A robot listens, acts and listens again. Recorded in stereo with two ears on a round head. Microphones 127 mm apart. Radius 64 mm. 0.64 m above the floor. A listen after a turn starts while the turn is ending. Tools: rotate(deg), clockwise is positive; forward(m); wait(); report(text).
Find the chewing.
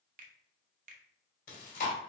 rotate(-65)
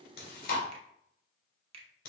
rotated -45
rotate(-65)
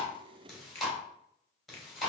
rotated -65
report("Facing the chewing.")